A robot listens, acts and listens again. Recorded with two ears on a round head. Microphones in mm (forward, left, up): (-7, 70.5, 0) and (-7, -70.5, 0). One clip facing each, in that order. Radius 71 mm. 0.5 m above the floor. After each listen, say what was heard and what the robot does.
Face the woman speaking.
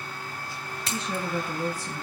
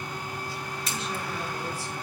Turn 90° left.
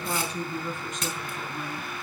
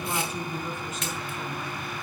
Found it: a woman speaking, straight ahead, over 4 m away.